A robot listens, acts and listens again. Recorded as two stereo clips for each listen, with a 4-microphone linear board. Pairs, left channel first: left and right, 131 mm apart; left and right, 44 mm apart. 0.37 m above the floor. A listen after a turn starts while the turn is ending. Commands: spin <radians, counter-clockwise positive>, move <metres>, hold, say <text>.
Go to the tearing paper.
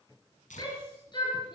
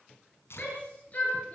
spin 1.22
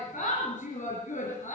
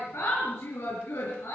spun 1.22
hold
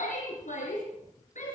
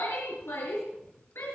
hold
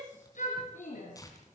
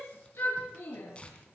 spin 0.44
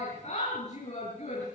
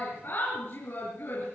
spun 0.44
hold
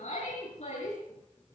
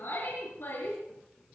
hold
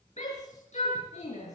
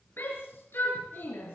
say Facing where the tearing paper came from. I can't hear it now. I did not reach it.